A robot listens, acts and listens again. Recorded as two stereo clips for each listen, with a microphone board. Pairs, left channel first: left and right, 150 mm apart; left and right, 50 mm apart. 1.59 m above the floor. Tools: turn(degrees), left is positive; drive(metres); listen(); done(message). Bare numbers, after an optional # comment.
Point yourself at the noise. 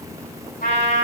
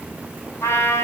turn(90)
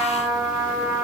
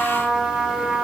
done("Found it: a trumpet, straight ahead.")